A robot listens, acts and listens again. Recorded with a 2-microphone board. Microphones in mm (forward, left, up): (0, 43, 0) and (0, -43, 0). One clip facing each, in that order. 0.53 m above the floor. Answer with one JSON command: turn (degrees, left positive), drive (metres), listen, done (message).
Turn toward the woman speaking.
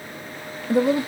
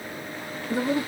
{"turn": 60}
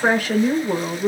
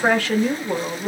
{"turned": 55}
{"done": "Facing the woman speaking, 2 to 4 m away."}